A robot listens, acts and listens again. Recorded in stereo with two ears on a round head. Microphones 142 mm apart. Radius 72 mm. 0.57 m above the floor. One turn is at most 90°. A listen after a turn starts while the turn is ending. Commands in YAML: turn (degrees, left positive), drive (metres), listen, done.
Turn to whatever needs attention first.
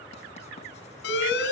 turn: 90
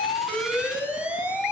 done: "Facing the alarm, over 4 m away."